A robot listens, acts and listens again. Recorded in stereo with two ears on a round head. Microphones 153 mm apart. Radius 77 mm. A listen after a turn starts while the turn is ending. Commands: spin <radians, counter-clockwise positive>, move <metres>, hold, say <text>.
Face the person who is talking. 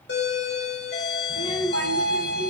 spin 0.52
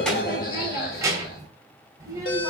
spin -0.35
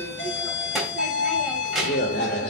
say Facing the child speaking, 2 to 4 m away.